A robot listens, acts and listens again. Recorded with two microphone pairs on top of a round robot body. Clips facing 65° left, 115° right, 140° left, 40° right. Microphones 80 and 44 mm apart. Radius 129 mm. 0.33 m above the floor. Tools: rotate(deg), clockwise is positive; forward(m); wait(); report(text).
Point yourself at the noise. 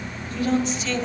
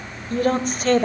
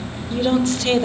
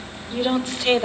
rotate(110)
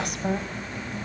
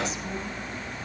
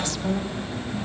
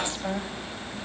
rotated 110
wait()
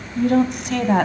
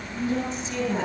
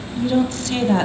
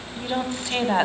rotate(-35)
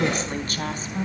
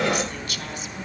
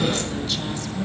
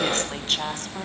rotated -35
rotate(-10)
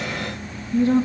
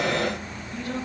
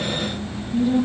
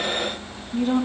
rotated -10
report("Facing the woman speaking, over 4 m away.")